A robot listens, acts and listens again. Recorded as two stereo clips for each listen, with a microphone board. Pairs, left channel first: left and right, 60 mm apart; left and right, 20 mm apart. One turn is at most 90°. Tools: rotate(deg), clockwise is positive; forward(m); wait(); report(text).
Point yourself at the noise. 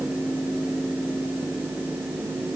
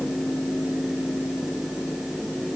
wait()
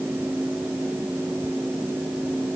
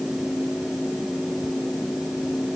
wait()
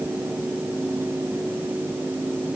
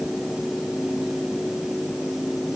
report("I can't make out anything.")